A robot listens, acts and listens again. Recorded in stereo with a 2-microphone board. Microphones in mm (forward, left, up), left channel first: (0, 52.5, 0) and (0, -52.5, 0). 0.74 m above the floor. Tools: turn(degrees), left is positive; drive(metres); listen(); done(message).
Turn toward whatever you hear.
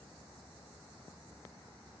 listen()
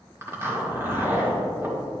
turn(degrees=-25)
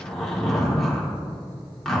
done("Facing the zipper, 1 to 2 m away.")